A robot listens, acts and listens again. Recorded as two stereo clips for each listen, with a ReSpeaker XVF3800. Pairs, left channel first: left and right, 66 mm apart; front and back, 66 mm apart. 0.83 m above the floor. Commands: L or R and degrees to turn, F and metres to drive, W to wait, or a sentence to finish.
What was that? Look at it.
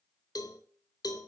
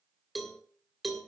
L90
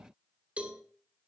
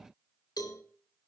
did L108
R20
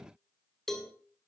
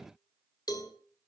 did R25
Found it: a cowbell, straight ahead, 2 to 4 m away.